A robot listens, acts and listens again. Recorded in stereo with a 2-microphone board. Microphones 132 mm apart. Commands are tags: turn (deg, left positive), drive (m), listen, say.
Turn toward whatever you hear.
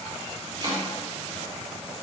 <turn deg="-40"/>
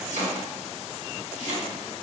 <turn deg="-100"/>
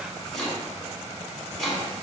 <say>Found it: chopping, straight ahead.</say>